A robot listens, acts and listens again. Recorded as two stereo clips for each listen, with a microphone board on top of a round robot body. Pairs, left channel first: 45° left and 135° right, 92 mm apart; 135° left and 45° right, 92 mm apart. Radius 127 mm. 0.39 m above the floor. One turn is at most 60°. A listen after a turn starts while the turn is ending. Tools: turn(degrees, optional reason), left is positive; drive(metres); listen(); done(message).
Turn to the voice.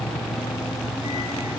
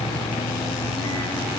listen()
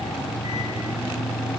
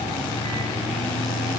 listen()
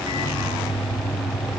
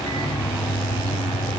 done("I can't make out anyone speaking to turn to.")